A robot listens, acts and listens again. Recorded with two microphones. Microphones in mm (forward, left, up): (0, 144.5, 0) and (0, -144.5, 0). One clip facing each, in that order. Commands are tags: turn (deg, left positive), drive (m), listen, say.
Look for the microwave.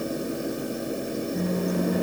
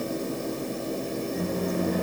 <listen/>
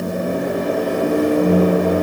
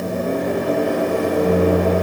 <turn deg="45"/>
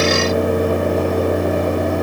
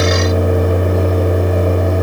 <turn deg="85"/>
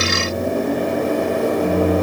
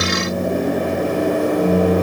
<turn deg="-15"/>
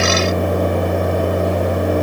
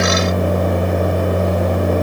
<say>Found it: a microwave, straight ahead.</say>